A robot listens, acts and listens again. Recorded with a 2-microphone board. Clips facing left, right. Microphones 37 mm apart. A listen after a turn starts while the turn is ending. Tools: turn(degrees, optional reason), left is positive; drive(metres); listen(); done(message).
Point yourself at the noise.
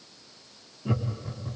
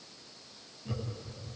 turn(degrees=35, reason="The laughter: about 35° left or 145° left.")
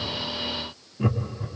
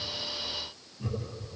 turn(degrees=105, reason="So it is at 105° left.")
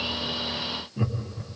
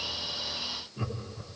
turn(degrees=25, reason="The laughter is now 25° left.")
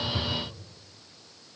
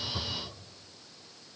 turn(degrees=-10, reason="The laughter is now 10° right.")
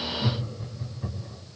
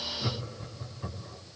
done("Facing the laughter.")